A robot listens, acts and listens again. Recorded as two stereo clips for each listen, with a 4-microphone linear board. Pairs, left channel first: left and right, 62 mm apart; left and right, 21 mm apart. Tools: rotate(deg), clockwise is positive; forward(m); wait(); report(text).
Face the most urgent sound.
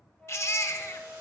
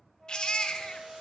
rotate(-45)
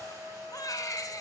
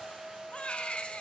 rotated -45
rotate(-85)
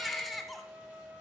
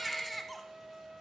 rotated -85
report("Facing the baby crying, under 1 m away.")